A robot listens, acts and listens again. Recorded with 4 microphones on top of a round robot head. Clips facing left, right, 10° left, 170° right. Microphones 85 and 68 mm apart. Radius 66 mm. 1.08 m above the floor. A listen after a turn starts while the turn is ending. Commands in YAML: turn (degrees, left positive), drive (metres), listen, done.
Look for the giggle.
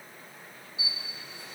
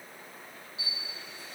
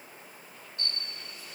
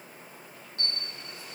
listen: true
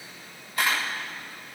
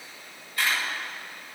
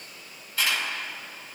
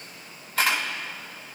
listen: true
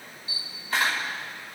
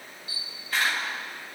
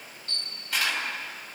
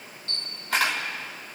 done: "I can't make out a giggle, only a camera shutter."